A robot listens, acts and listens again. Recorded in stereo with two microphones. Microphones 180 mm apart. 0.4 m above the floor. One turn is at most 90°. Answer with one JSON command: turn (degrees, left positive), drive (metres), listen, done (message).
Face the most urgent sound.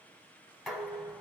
{"listen": true}
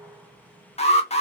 {"turn": 40}
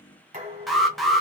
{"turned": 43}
{"done": "Facing the alarm."}